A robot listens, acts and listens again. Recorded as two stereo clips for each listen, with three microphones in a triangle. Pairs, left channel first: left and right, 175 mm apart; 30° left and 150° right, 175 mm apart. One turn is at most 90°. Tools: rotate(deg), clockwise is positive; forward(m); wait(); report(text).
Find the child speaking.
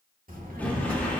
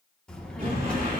rotate(55)
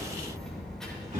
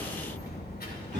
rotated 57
report("Found it: a child speaking, straight ahead.")